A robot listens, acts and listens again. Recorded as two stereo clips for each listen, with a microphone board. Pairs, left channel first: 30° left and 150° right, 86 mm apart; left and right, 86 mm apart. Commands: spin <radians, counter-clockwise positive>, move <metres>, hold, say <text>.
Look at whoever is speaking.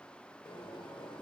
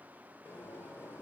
hold
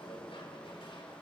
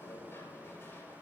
hold
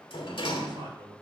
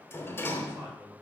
spin -2.71
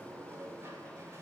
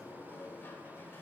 hold
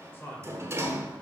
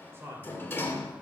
spin -0.52
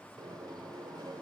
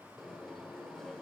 hold
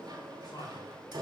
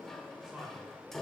spin -0.17
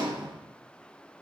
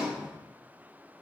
hold
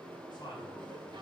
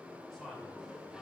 say Found it: a man speaking, straight ahead, 2 to 4 m away.